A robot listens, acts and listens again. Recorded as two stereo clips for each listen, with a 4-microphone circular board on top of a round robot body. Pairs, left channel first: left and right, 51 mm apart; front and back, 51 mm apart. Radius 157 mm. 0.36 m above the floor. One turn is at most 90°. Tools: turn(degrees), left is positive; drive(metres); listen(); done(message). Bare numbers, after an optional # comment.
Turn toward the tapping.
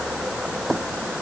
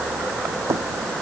# The tapping: 175° left.
turn(90)
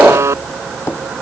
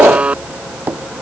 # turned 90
# The tapping is now 120° left.
turn(90)
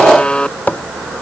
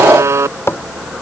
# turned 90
# The tapping is now 35° left.
turn(35)
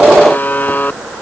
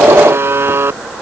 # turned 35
listen()
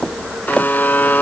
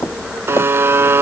# The tapping is now 20° left.
turn(20)
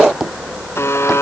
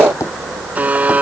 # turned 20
done("Found it: tapping, straight ahead.")